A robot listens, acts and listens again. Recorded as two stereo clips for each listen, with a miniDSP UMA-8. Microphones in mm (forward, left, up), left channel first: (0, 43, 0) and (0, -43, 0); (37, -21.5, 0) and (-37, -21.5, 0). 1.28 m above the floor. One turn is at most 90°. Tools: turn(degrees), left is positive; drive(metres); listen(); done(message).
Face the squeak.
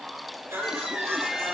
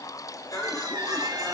turn(degrees=-90)
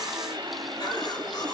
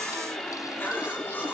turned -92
turn(degrees=-80)
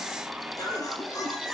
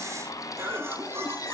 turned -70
turn(degrees=-10)
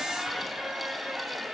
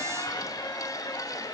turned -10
done("Facing the squeak, 2 to 4 m away.")